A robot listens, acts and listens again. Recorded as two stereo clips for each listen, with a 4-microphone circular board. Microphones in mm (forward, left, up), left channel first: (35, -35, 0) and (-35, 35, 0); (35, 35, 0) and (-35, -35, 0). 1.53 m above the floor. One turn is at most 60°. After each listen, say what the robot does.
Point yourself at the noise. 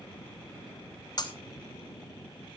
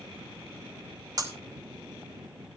Turn 60° right.
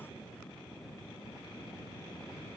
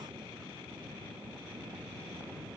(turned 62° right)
Turn 25° right.
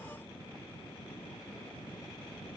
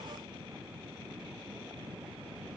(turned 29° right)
I heard breaking glass from this way, but can't make it out now.